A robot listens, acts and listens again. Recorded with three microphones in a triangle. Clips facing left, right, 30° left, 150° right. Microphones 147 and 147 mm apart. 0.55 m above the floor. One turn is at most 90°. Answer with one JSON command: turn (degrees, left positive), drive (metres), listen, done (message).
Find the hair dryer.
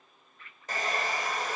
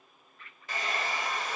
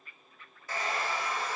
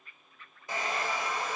{"turn": 90}
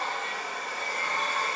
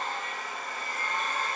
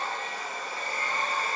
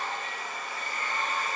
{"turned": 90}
{"turn": 85}
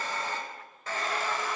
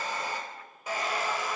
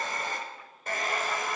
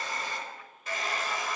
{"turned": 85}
{"turn": -15}
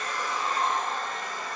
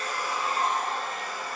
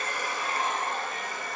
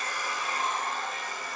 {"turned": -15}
{"done": "Facing the hair dryer."}